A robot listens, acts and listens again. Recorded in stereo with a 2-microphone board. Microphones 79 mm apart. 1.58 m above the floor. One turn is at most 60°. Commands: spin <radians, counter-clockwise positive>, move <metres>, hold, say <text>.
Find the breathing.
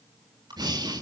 spin -1.05
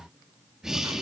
say Facing the breathing, 1 to 2 m away.